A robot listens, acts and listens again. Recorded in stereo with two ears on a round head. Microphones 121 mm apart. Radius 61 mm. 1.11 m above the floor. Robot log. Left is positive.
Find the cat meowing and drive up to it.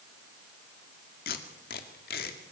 cmd idle
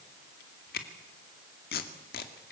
cmd idle
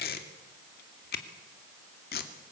end: I can't make out a cat meowing to turn to.